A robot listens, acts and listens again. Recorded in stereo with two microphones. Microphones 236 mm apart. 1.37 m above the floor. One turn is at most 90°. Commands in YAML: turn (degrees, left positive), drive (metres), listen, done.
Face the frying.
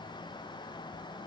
listen: true
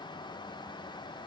listen: true
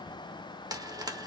turn: -15
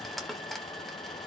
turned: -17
done: "Found it: frying, straight ahead, 1 to 2 m away."